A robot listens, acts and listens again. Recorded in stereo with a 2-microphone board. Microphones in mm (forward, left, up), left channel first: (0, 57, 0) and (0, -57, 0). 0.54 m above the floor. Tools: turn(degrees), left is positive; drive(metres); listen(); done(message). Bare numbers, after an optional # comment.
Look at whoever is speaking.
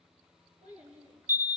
turn(-90)
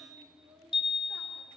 # So it is at 25° right.
turn(-25)
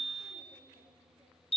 listen()
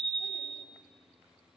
listen()
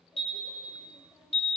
done("I heard a child speaking from this way, but can't make it out now.")